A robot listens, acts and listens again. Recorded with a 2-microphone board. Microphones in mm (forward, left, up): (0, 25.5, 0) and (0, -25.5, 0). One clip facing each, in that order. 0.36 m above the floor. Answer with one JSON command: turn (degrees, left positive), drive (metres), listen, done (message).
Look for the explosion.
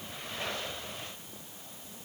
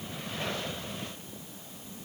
{"listen": true}
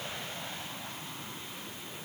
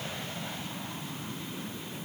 {"listen": true}
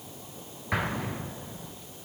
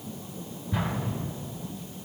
{"turn": 90}
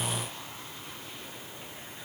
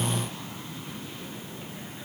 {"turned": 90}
{"done": "Facing where the explosion came from. I can't hear it now."}